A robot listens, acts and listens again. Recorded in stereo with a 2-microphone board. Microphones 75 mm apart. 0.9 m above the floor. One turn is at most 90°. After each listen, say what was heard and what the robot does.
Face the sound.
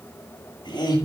Turn 90° left.
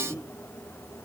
Facing the laughter, over 4 m away.